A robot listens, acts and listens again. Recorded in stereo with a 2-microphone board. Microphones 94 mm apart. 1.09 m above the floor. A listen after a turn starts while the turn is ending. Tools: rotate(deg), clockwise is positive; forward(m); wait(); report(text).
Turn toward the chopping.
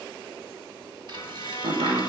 rotate(90)
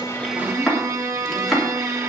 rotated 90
report("Found it: chopping, straight ahead, 2 to 4 m away.")